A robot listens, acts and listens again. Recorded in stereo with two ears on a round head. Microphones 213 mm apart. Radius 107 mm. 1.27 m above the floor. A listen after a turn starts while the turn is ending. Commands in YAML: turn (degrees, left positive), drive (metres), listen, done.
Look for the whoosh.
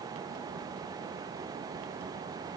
listen: true
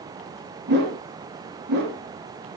turn: -45
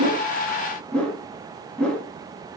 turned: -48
done: "Facing the whoosh, 2 to 4 m away."